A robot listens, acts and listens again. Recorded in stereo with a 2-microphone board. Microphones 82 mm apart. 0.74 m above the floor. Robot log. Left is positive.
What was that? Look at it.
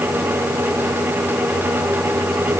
cmd idle
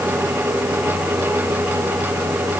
cmd idle
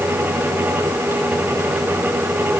end: I can't make out anything to turn to.